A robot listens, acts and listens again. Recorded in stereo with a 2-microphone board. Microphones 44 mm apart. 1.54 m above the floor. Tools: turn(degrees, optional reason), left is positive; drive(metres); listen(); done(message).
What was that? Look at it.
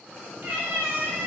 turn(degrees=-50, reason="The cat meowing: about 50° right or 130° right.")
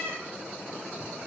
turn(degrees=-60, reason="So it is at 60° right.")
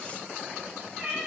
done("Facing the cat meowing, 2 to 4 m away.")